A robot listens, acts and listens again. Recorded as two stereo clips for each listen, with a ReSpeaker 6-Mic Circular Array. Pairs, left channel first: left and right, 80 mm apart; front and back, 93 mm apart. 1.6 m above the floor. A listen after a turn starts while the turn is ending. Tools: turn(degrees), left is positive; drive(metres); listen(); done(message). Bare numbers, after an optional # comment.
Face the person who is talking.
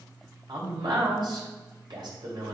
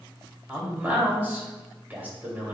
# The man speaking: 110° right.
turn(-110)
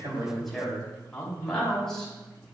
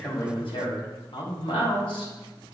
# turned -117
done("Found it: a man speaking, straight ahead.")